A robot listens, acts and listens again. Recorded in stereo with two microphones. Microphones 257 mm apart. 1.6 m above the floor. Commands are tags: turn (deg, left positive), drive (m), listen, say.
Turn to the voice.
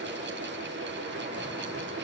<listen/>
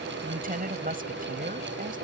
<turn deg="-35"/>
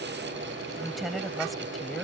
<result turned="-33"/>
<say>Found it: a woman speaking, straight ahead.</say>